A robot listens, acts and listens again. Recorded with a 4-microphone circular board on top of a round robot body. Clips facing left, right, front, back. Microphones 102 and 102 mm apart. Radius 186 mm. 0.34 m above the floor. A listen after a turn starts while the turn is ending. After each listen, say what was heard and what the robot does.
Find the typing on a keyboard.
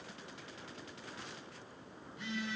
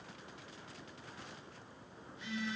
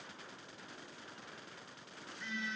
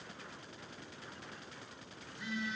Keep listening.
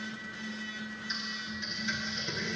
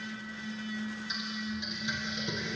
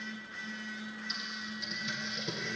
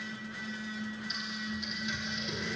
The typing on a keyboard: 15° right. Turn 15° right.
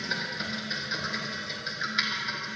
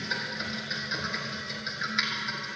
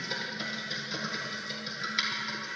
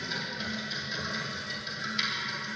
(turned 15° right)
Facing the typing on a keyboard, 2 to 4 m away.